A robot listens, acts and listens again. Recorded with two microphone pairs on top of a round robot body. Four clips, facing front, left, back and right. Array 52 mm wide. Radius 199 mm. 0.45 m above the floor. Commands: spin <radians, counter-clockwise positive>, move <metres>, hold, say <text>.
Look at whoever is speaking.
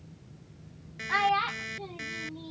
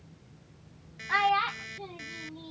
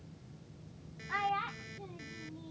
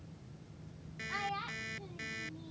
spin 0.87
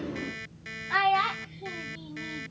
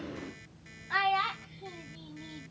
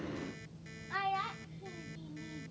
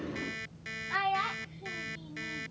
spin 0.26
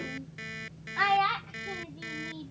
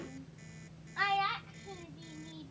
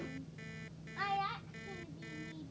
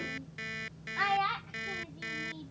say Found it: a child speaking, straight ahead.